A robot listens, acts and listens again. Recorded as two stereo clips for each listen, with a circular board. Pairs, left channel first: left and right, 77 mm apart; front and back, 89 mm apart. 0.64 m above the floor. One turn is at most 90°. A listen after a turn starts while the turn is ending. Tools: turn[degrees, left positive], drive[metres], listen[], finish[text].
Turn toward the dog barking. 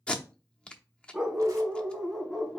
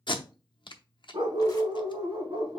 Thought: The dog barking: 170° left.
Action: turn[90]
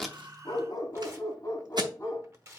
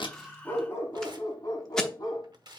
Thought: The dog barking is now 35° left.
Action: turn[35]
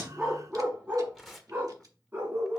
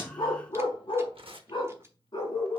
Thought: The dog barking is now 30° right.
Action: turn[-30]
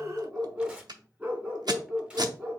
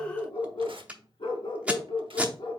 Thought: The dog barking is now 15° right.
Action: turn[-15]
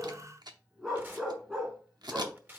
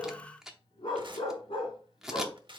Action: finish[Found it: a dog barking, straight ahead.]